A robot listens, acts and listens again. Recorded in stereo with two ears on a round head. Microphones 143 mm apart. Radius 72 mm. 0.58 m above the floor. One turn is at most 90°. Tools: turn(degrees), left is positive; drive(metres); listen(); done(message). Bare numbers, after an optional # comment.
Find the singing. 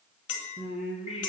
# The singing: about 40° left or 140° left.
turn(40)
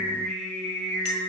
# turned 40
done("Facing the singing, 2 to 4 m away.")